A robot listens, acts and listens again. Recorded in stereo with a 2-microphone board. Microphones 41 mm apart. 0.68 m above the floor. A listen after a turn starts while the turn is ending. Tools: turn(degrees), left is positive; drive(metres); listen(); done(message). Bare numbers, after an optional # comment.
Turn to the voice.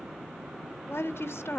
turn(90)
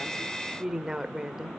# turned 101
# So it is at 10° right.
turn(-10)
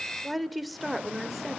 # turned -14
done("Found it: a woman speaking, straight ahead.")